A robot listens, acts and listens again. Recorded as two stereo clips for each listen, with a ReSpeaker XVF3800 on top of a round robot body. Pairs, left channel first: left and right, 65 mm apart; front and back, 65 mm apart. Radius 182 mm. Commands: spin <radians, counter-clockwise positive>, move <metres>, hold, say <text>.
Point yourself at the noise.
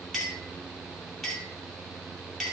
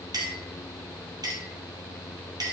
spin 3.14
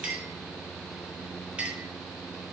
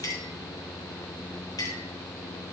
spin -0.35
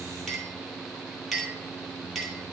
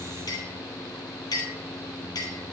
say Facing the clink.